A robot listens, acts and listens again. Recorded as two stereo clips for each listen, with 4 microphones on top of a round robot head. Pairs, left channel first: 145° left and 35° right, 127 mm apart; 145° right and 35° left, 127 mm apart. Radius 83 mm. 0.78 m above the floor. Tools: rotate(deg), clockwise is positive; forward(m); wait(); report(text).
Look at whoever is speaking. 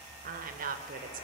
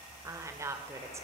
rotate(35)
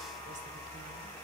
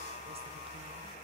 wait()
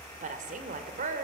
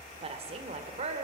rotate(10)
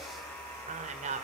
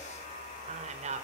report("Facing the woman speaking.")